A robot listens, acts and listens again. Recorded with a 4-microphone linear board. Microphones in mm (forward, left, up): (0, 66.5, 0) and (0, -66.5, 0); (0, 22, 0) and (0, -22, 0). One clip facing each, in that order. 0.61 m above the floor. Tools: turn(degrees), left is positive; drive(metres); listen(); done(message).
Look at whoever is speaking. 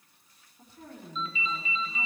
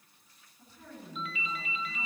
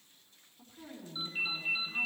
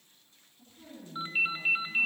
turn(degrees=60)
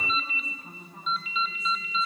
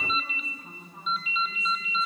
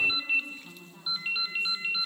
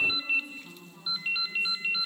done("Facing the woman speaking.")